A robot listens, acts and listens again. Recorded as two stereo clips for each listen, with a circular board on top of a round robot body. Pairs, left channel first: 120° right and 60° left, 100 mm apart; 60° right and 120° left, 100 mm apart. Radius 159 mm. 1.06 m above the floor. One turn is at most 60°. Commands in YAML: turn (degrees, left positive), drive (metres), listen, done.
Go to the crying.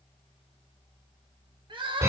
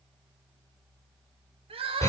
turn: 60
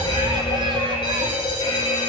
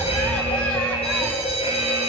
turn: 40
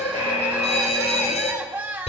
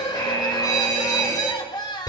turn: -10
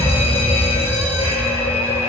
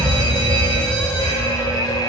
listen: true
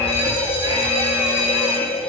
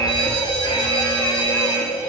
listen: true
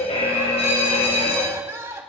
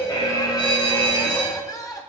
drive: 1.0
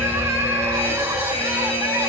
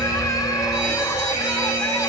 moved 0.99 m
listen: true
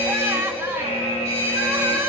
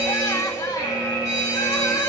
listen: true
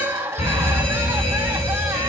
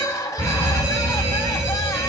drive: 1.0
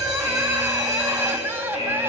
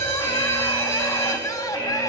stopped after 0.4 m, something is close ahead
done: "I am next to the crying."